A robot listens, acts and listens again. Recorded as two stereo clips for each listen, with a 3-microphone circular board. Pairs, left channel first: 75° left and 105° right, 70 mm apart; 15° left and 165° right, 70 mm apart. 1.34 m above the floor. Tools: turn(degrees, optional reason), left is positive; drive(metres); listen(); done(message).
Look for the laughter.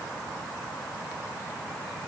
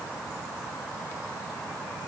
listen()
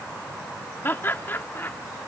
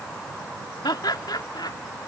turn(degrees=15, reason="The laughter: 15° left.")
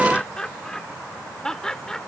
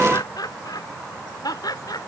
done("Facing the laughter.")